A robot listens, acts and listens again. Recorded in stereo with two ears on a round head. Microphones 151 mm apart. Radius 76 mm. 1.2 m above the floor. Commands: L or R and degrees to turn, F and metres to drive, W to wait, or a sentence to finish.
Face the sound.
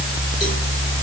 W
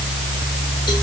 W
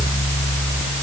I can't make out anything.